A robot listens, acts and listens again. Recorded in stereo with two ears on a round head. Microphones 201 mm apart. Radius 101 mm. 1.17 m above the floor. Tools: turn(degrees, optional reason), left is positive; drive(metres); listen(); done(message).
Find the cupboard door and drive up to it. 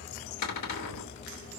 turn(degrees=90)
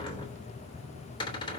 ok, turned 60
turn(degrees=20, reason="So it is at 20° left.")
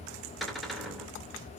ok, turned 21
drive(metres=1.0)
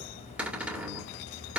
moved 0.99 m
drive(metres=1.0)
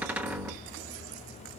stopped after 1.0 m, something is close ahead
turn(degrees=-10, reason="The cupboard door is now 10° right.")
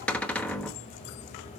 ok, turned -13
done("Arrived at the cupboard door, straight ahead.")